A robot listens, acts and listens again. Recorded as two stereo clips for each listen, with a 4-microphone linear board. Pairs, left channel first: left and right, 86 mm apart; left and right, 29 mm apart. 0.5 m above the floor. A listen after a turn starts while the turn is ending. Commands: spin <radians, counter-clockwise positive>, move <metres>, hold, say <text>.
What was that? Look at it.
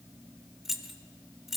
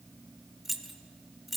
spin -0.52
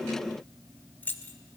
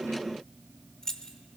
spin 0.44
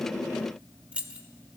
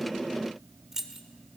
spin -0.26
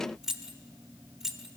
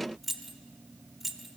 say Facing the keys jangling, under 1 m away.